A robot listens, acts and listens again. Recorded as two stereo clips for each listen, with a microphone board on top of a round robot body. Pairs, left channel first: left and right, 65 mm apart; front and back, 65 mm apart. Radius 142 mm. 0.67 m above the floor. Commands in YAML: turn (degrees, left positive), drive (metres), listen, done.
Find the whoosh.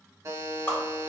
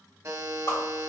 turn: 20
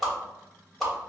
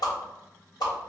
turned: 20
done: "Found it: a whoosh, straight ahead, 1 to 2 m away."